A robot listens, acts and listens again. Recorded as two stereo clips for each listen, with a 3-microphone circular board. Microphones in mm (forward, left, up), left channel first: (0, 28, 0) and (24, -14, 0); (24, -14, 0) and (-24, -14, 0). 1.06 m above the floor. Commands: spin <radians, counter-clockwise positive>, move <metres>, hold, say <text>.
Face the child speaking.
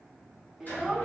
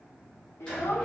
spin 0.52
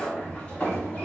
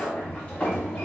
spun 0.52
hold
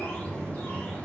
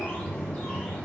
hold
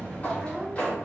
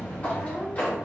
spin 0.70
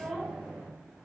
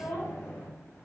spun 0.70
say Found it: a child speaking, straight ahead.